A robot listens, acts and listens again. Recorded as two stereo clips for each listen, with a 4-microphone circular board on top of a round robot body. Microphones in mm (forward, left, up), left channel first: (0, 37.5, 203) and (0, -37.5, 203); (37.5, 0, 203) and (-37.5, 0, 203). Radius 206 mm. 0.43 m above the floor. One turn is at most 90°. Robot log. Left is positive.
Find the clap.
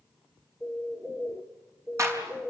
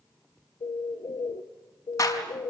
note: The clap: 45° right.
cmd yaw -45
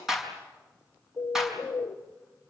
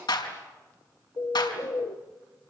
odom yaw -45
end: Facing the clap, over 4 m away.